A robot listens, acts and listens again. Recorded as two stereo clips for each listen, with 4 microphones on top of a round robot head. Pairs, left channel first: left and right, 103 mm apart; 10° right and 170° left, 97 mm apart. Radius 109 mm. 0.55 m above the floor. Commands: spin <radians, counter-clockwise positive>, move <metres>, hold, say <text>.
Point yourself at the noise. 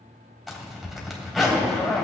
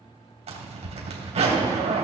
spin 3.05
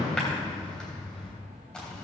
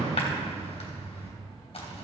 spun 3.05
say Facing the zipper.